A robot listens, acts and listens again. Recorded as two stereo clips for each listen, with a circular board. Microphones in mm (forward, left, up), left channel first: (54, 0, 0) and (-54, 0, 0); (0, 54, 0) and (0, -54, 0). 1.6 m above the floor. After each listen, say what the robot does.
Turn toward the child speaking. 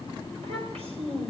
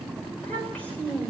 Turn 170° left.
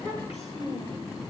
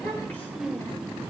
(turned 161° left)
Turn 15° left.
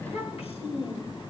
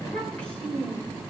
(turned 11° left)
Turn 15° left.
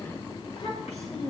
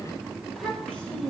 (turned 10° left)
Turn 10° left.
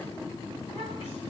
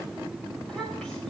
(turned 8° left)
Keep listening.
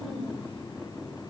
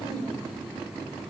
Keep listening.
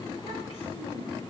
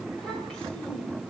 Facing where the child speaking came from. I can't hear it now.